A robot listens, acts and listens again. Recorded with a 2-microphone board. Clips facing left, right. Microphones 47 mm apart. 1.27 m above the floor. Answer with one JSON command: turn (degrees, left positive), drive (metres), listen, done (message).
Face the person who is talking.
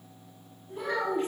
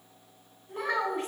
{"turn": -65}
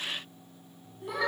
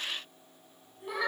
{"done": "Found it: a child speaking, straight ahead."}